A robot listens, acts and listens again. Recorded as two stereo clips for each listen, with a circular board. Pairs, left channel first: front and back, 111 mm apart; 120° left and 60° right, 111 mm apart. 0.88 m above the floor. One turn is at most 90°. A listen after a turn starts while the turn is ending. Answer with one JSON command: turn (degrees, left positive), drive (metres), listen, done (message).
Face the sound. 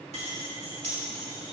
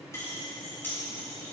{"turn": -90}
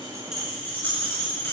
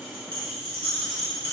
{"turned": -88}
{"turn": -65}
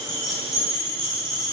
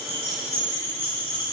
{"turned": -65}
{"done": "Facing the keys jangling, over 4 m away."}